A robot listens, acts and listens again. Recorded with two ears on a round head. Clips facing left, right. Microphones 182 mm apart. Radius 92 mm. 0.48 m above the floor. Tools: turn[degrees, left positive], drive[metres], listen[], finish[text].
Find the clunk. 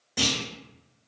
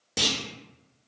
Thought: The clunk: about 50° right or 130° right.
Action: turn[-50]
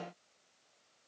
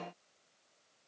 Action: listen[]
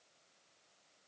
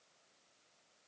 Action: finish[I heard a clunk, but can't make it out now. It was about straight ahead or 80° right.]